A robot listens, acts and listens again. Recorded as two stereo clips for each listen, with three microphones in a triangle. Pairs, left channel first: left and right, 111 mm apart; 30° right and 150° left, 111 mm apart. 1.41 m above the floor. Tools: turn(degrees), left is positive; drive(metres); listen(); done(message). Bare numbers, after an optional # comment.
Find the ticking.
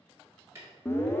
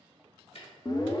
# The ticking: 30° right.
turn(-30)
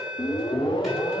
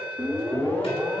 listen()
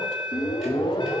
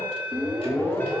listen()
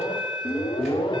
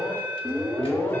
done("I heard ticking from this way, but can't make it out now.")